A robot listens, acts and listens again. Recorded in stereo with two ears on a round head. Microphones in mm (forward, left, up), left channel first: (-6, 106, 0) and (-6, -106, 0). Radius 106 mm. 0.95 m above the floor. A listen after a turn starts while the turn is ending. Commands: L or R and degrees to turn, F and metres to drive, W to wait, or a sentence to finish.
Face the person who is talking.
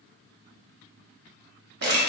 W
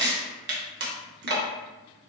W
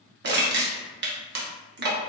I can't make out anyone speaking to turn to.